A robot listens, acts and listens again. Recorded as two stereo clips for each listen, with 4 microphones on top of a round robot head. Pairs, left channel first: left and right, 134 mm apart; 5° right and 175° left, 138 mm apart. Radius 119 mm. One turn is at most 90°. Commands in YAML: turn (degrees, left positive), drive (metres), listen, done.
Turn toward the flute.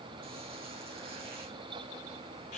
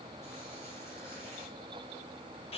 listen: true
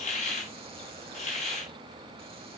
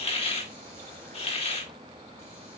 listen: true
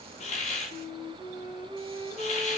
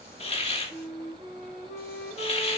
turn: -35
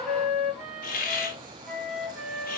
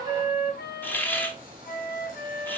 done: "Found it: a flute, straight ahead, over 4 m away."